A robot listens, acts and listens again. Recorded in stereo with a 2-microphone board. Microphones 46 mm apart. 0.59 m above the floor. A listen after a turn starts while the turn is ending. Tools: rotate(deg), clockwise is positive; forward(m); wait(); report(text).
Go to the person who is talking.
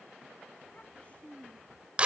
rotate(-25)
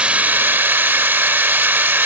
wait()
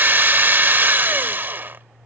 wait()
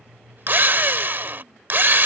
report("I heard a child speaking, but can't make it out now. It was about straight ahead or 130° left. I did not reach it.")